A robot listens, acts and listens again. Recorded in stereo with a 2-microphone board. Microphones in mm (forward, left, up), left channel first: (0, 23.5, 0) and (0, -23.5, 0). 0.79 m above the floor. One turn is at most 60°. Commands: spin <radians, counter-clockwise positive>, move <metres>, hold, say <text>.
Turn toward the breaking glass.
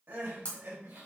spin 0.61
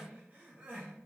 hold
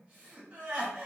say I heard breaking glass, but can't make it out now. It was about straight ahead or 110° left.